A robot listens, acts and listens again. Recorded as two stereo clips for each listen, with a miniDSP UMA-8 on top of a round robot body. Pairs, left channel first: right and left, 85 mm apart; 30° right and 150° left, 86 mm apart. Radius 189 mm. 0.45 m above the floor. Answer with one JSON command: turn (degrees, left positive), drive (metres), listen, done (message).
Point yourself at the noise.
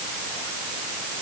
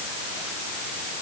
{"listen": true}
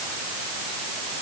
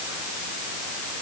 {"listen": true}
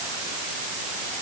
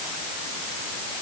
{"done": "I can't make out anything to turn to."}